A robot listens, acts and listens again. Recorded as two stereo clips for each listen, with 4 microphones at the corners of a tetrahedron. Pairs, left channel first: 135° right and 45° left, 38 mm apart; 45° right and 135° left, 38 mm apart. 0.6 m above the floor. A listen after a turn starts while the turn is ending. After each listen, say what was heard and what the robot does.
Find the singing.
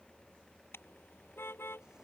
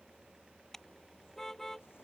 Keep listening.
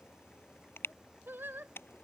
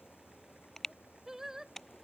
The singing: 60° left. Turn 60° left.
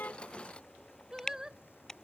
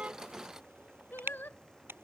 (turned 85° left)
The singing is now 30° right. Turn 30° right.
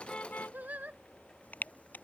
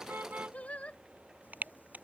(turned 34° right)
Facing the singing.